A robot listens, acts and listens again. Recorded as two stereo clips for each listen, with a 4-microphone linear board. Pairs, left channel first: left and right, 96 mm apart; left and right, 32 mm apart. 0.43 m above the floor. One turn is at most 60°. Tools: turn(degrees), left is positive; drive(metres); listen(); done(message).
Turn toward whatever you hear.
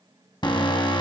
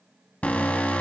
turn(degrees=55)
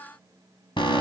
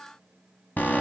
turn(degrees=60)
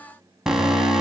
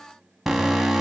done("Found it: an alarm, straight ahead.")